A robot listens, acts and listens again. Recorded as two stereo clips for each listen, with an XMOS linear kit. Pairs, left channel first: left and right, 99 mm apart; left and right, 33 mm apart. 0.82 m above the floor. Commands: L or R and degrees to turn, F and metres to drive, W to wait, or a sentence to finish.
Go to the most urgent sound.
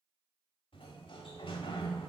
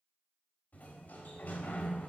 W
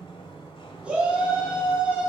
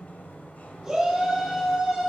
R30
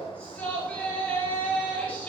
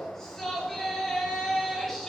L15
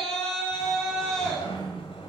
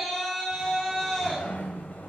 F1.0
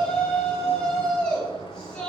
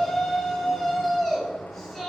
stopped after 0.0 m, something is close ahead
L10
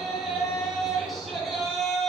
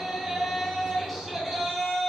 Something is in my way. I am facing the shout but have not reached it.